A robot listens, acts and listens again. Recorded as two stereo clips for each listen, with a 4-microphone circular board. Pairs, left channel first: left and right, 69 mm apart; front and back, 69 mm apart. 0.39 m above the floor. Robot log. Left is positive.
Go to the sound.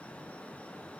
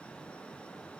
cmd idle
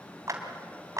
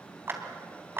note: The clap: 130° right.
cmd yaw -130
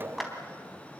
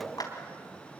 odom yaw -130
cmd fwd 1.0
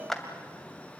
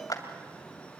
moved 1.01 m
cmd fwd 1.0
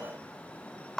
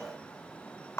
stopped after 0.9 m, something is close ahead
note: The clap is now 10° left.
cmd yaw +10
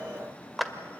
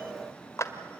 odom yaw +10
end: I am next to the clap.